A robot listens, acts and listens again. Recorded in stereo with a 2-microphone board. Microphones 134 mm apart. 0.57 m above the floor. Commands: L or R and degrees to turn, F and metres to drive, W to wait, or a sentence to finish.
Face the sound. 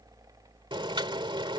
R35
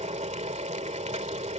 R100
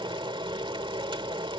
R45
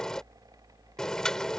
Facing the boiling.